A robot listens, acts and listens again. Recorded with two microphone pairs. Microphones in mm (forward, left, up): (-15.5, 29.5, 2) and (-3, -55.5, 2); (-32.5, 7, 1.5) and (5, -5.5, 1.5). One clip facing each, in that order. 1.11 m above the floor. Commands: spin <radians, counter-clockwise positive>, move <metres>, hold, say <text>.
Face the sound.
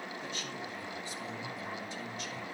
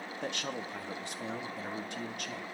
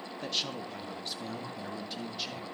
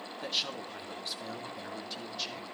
spin -1.92
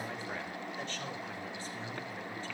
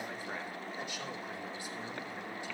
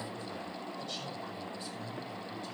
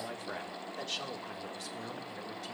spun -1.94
say Facing the man speaking.